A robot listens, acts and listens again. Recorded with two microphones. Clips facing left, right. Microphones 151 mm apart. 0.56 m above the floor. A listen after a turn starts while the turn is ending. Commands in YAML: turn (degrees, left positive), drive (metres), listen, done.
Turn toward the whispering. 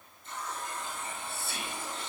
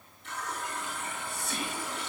turn: -45
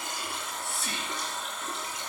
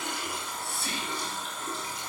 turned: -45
done: "Facing the whispering."